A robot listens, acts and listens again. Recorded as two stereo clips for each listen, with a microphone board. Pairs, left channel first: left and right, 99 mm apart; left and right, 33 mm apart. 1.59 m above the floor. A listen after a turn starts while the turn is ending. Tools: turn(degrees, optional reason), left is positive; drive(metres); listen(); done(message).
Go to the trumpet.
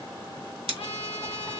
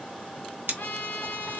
turn(degrees=70, reason="The trumpet: about 70° left or 110° left.")
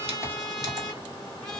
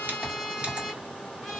drive(metres=1.0)
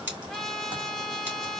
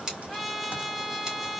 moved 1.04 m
drive(metres=1.0)
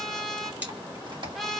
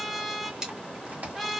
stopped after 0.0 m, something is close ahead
done("Arrived at the trumpet, straight ahead.")